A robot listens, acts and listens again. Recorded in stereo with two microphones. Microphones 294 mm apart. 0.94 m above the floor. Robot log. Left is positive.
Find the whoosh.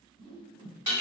note: The whoosh: about 45° right or 135° right.
cmd yaw -45
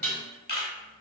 cmd idle
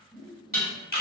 end: Facing the whoosh.